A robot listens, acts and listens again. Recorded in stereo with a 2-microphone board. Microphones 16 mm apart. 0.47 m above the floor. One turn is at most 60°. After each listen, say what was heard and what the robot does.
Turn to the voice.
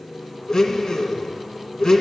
Keep listening.
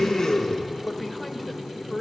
The woman speaking: about 15° left or 165° left. Turn 15° left.
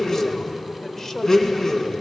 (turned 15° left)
So it is at 150° left. Turn 60° left.
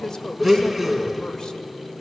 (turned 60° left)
The woman speaking is now 110° left. Turn 60° left.
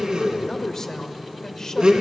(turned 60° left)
The woman speaking is now 45° left. Turn 45° left.
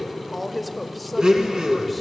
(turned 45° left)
Facing the woman speaking.